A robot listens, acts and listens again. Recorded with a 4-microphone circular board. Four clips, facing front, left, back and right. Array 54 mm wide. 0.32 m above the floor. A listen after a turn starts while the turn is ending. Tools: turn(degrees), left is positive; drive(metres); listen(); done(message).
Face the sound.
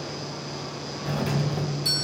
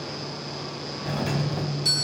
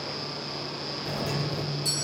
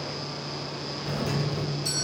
turn(degrees=60)
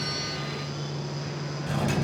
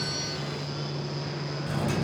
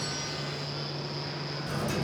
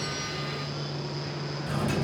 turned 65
done("Facing the doorbell.")